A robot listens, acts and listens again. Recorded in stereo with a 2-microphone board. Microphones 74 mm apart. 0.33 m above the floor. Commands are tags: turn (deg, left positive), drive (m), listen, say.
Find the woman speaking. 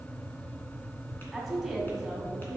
<turn deg="30"/>
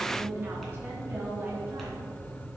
<turn deg="-30"/>
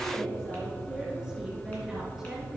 <say>Facing the woman speaking, over 4 m away.</say>